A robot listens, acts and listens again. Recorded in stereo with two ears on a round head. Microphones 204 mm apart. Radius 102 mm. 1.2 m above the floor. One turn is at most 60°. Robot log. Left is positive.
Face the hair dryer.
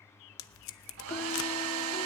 note: The hair dryer: about 70° right or 110° right.
cmd yaw -60
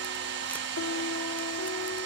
note: So it is at 50° right.
cmd yaw -50
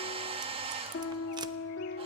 note: The hair dryer is now 25° right.
cmd yaw -25
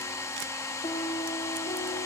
note: The hair dryer is now 15° left.
cmd yaw +15
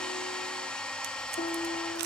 end: Facing the hair dryer, 1 to 2 m away.